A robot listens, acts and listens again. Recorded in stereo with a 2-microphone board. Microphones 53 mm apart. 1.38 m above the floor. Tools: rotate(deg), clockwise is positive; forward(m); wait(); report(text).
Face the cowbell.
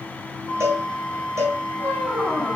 rotate(55)
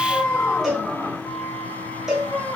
report("Found it: a cowbell, straight ahead.")